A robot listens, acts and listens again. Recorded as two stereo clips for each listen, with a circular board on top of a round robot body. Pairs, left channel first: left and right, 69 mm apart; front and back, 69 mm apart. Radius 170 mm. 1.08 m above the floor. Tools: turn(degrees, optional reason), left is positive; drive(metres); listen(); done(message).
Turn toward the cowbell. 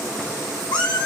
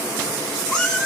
listen()
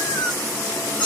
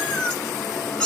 listen()
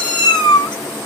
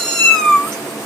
done("I can't make out a cowbell to turn to.")